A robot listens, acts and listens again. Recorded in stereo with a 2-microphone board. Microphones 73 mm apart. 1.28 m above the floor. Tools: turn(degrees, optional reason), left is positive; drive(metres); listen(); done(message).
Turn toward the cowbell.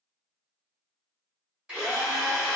listen()
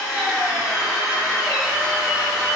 listen()
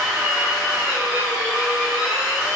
done("I can't make out a cowbell, only a drill.")